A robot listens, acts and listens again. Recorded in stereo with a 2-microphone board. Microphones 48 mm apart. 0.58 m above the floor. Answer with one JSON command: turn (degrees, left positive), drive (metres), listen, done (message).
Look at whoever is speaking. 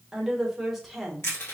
{"turn": 30}
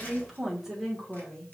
{"turn": 30}
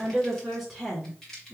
{"turn": 30}
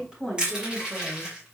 {"turn": -10}
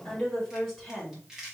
{"done": "Facing the woman speaking."}